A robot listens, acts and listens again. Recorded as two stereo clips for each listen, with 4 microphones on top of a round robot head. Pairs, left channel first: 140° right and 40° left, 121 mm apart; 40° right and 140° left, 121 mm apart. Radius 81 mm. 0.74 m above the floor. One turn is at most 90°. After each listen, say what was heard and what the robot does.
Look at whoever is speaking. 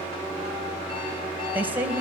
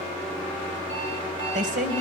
The woman speaking: 120° left. Turn 90° left.
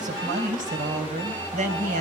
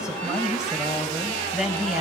The woman speaking is now 55° left. Turn 55° left.
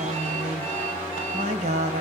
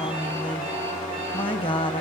The woman speaking is now 10° left. Turn 10° left.
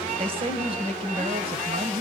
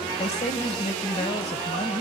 Found it: a woman speaking, straight ahead, 2 to 4 m away.